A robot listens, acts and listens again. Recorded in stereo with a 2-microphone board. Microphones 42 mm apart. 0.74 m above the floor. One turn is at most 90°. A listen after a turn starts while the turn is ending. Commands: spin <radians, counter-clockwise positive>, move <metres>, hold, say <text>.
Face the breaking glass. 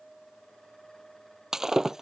spin -0.52
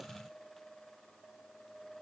hold
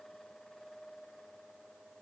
say I heard breaking glass, but can't make it out now. It was about 20° left or 140° right.